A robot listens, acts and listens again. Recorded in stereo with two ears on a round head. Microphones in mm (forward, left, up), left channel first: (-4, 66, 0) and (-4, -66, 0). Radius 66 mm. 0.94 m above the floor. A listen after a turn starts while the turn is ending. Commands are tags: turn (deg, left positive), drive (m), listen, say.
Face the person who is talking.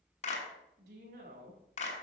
<turn deg="-90"/>
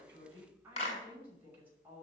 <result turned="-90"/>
<turn deg="-15"/>
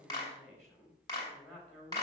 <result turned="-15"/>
<say>Found it: a woman speaking, straight ahead, over 4 m away.</say>